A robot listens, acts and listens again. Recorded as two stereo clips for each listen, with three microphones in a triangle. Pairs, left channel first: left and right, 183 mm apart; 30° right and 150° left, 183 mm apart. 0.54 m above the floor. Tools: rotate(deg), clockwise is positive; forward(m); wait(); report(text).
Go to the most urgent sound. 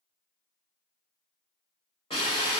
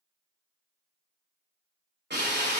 wait()
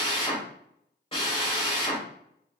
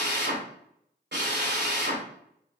wait()
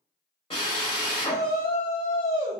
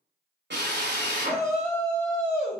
rotate(-70)
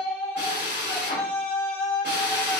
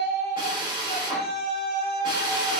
rotate(-10)
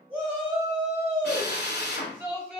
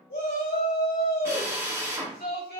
forward(1.0)
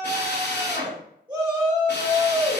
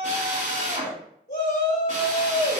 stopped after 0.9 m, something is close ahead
rotate(10)
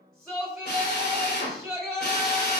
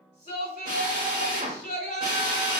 report("Arrived at the shout, straight ahead.")